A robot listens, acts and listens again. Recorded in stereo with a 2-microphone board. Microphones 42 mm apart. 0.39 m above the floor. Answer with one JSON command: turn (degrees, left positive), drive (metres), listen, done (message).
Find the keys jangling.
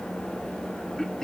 {"listen": true}
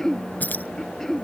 {"turn": 40}
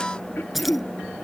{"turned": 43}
{"done": "Facing the keys jangling."}